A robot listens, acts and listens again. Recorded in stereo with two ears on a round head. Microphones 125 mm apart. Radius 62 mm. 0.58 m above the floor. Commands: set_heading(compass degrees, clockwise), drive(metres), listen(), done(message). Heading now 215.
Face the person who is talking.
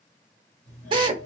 listen()
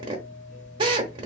listen()
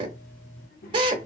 set_heading(150)
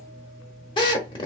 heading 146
listen()
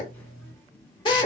set_heading(131)
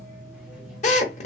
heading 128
listen()
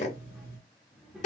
done("Found it: a child speaking, straight ahead.")